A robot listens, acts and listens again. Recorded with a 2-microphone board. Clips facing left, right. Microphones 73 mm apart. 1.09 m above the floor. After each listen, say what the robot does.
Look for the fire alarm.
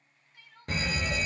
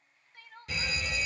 Turn 45° left.
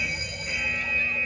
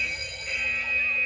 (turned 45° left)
Turn 15° left.
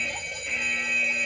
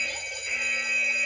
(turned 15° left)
Found it: a fire alarm, straight ahead.